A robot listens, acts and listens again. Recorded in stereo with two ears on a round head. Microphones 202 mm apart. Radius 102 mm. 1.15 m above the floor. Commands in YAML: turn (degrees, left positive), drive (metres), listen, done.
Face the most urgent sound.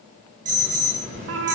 turn: -35
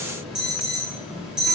done: "Facing the alarm."